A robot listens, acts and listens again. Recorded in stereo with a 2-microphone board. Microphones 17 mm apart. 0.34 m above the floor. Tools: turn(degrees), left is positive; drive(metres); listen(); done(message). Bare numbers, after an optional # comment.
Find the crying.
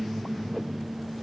listen()
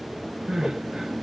# The crying: about 55° right or 125° right.
turn(-55)
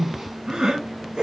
# So it is at 70° right.
turn(-70)
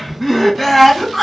done("Facing the crying.")